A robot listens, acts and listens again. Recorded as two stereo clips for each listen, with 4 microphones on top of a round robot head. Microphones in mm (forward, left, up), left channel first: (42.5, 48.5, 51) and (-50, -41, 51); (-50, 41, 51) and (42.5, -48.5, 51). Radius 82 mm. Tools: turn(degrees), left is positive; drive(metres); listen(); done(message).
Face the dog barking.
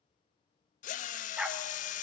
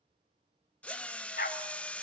turn(degrees=145)
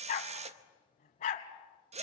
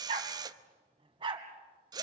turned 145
turn(degrees=10)
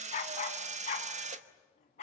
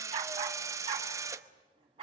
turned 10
done("Facing the dog barking, 2 to 4 m away.")